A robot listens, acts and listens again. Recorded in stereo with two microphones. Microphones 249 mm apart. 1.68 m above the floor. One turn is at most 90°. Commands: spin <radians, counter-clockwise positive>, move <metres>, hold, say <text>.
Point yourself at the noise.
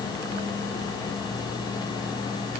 hold
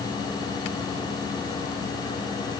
hold
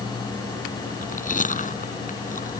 spin 0.52
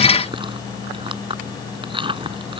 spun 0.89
spin -0.35
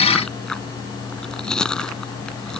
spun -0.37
say Found it: chewing, straight ahead.